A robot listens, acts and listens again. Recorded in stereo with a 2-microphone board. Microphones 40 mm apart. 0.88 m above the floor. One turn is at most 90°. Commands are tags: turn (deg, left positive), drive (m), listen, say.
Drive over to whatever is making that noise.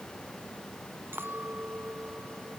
<turn deg="-70"/>
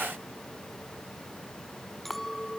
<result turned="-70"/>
<drive m="1.0"/>
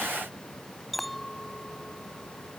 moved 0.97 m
<drive m="1.0"/>
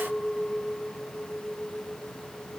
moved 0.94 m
<drive m="1.0"/>
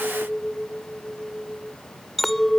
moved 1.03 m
<drive m="1.0"/>
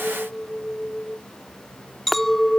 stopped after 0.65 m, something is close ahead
<say>Arrived at the clink, straight ahead.</say>